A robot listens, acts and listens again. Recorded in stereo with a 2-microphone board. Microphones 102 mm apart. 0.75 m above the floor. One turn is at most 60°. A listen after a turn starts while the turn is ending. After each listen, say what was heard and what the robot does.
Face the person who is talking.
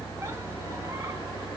Keep listening.
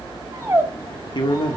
The man speaking: about 50° left or 130° left. Turn 50° left.
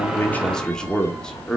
Found it: a man speaking, straight ahead.